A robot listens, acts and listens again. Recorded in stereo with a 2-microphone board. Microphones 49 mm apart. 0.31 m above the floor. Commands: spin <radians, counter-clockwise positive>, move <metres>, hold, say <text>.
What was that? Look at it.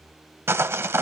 spin -1.05
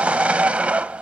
spin -0.52
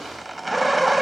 say Facing the sawing.